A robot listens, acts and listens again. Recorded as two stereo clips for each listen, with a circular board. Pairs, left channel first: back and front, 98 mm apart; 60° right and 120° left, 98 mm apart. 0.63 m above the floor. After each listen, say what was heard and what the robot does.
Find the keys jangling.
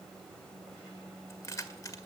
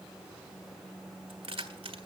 The keys jangling: 125° left. Turn 125° left.
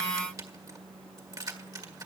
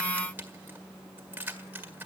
The keys jangling is now 50° left. Turn 50° left.
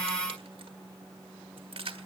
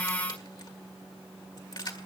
The keys jangling is now 20° right. Turn 20° right.
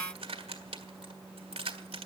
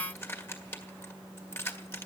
Found it: keys jangling, straight ahead, 1 to 2 m away.